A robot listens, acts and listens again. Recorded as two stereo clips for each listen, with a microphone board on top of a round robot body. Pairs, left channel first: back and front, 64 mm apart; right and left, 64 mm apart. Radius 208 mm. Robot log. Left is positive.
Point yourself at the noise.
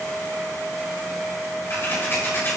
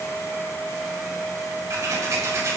note: The scissors: 130° left.
cmd yaw +130
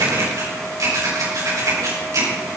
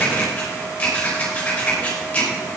note: The scissors is now 25° right.
cmd yaw -25
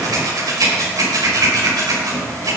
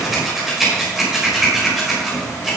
end: Found it: scissors, straight ahead.